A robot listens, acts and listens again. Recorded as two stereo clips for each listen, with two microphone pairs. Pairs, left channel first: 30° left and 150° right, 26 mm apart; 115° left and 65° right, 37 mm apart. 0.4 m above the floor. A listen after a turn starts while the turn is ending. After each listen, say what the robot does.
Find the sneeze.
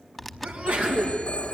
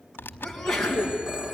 Turn 160° right.
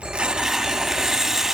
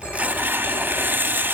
I heard a sneeze from this way, but can't make it out now.